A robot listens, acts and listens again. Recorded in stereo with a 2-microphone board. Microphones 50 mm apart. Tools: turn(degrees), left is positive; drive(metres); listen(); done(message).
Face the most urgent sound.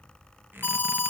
turn(degrees=40)
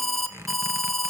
done("Facing the alarm, under 1 m away.")